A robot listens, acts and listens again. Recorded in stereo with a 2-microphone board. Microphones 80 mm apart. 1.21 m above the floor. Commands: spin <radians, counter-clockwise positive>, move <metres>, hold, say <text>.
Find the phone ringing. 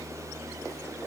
hold
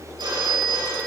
spin -1.57
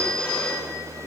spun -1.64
spin 0.26
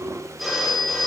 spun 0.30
say Found it: a phone ringing, straight ahead, over 4 m away.